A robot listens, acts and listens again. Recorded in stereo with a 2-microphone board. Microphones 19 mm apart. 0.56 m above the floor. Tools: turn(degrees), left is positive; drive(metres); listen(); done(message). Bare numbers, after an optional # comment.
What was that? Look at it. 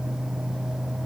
listen()
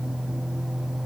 listen()
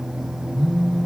# The phone buzzing: about 50° left or 130° left.
turn(50)
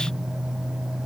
listen()
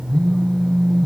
# So it is at 60° left.
turn(60)
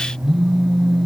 done("Facing the phone buzzing, 1 to 2 m away.")